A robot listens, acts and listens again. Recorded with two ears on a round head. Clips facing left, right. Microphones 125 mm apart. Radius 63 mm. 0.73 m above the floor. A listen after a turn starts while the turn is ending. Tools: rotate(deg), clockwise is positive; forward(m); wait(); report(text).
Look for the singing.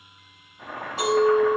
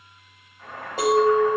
wait()
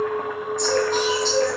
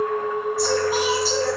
rotate(30)
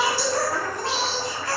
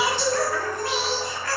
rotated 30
rotate(-25)
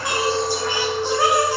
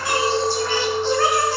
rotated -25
rotate(-15)
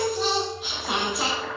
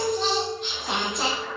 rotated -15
report("Facing the singing.")